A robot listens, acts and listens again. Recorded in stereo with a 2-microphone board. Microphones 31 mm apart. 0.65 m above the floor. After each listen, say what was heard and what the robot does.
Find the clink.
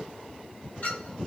The clink: about 70° left or 110° left. Turn 70° left.
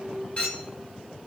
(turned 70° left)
So it is at 30° left. Turn 30° left.
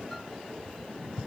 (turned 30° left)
Keep listening.
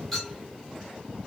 Found it: a clink, straight ahead.